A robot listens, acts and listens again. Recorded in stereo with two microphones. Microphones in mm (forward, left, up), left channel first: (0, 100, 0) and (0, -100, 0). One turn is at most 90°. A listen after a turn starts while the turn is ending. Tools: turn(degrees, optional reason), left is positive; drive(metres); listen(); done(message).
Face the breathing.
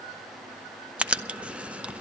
listen()
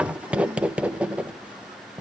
listen()
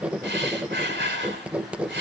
turn(degrees=-65, reason="The breathing: about 65° right or 115° right.")
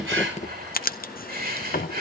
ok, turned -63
turn(degrees=-50, reason="So it is at 50° right.")
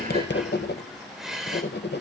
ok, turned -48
done("Facing the breathing, 2 to 4 m away.")